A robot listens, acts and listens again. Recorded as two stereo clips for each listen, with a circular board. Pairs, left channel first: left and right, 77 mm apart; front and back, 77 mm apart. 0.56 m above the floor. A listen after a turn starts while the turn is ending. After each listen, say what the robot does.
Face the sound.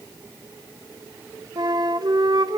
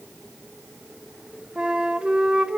Turn 105° right.
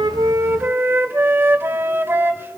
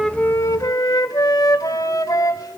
Turn 30° right.
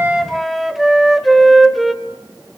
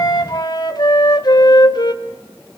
Found it: a flute, straight ahead, 1 to 2 m away.